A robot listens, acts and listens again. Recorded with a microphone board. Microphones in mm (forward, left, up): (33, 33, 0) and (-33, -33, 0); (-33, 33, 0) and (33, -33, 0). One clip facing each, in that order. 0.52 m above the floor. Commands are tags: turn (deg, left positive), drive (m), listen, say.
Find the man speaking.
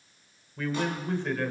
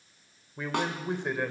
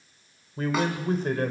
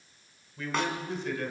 <turn deg="155"/>
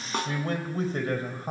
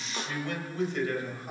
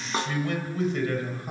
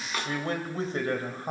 <say>Facing the man speaking.</say>